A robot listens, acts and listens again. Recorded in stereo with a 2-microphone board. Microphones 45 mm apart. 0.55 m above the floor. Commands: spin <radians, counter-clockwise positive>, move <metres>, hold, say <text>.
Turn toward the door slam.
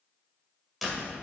spin 0.52
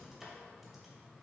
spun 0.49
hold
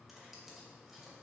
say I heard a door slam, but can't make it out now. It was about 30° right or 155° left.